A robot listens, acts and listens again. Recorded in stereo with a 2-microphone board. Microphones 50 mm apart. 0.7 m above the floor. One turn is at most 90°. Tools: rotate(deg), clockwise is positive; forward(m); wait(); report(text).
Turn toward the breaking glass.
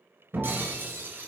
rotate(45)
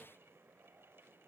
wait()
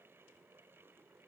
report("I heard breaking glass, but can't make it out now. It was about straight ahead or 90° right.")